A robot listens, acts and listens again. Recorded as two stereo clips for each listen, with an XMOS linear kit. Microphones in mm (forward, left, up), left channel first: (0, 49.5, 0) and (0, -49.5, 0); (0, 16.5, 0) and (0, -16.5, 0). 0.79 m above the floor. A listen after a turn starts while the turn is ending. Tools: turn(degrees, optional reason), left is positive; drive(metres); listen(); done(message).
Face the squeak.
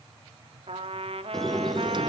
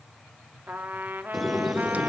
turn(degrees=30)
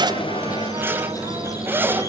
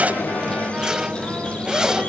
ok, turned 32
turn(degrees=145, reason="So it is at 145° left.")
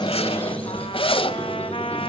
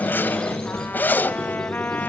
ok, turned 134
turn(degrees=15, reason="The squeak is now 15° left.")
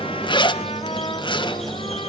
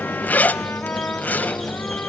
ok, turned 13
done("Facing the squeak, 2 to 4 m away.")